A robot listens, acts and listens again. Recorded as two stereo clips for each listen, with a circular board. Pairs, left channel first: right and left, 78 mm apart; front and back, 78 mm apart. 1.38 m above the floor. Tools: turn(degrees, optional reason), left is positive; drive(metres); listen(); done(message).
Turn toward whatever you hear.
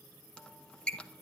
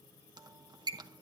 turn(degrees=-170, reason="The squeak: 170° right.")
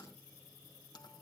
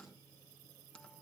listen()
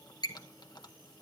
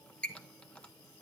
turn(degrees=-75, reason="The squeak is now 75° right.")
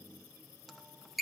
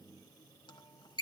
done("Facing the squeak.")